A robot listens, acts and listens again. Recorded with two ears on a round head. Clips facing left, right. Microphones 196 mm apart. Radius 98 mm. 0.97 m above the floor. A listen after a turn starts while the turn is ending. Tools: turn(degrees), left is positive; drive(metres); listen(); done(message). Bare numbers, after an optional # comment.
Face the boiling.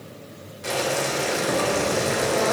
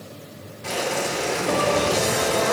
# The boiling: about 70° left or 110° left.
turn(70)
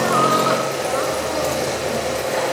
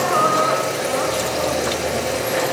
done("Found it: boiling, straight ahead.")